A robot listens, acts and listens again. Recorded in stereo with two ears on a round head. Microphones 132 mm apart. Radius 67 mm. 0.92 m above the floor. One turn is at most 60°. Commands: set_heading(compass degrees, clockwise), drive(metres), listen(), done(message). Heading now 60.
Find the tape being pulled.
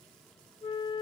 listen()
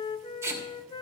set_heading(80)
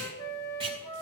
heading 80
set_heading(140)
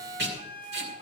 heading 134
set_heading(194)
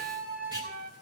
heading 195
set_heading(225)
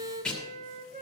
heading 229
done("Facing the tape being pulled, 2 to 4 m away.")